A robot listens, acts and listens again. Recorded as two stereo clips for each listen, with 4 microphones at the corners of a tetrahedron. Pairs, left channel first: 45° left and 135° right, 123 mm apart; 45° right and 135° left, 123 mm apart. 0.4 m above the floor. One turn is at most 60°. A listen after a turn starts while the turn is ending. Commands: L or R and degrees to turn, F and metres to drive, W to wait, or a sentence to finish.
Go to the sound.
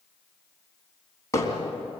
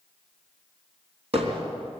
L60
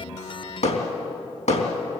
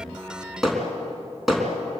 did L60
L45
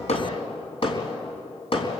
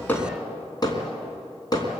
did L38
L10
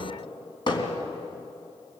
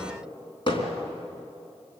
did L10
F1.0
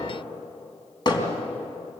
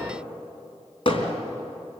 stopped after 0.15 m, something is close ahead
Blocked. The hammering is further on, straight ahead.